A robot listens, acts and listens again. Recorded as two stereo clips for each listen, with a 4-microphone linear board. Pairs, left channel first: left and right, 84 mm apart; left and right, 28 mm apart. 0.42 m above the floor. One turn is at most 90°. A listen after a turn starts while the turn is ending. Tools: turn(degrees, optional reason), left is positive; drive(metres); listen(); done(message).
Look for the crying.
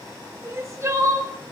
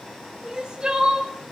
turn(degrees=-35, reason="The crying: about 35° right or 145° right.")
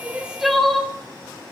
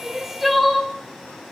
done("Found it: crying, straight ahead.")